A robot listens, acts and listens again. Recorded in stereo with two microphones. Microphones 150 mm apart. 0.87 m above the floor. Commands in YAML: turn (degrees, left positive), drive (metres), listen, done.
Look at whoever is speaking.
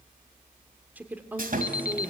turn: -30
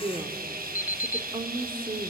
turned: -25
turn: -145
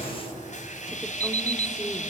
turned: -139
listen: true
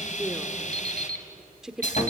done: "Found it: a woman speaking, straight ahead."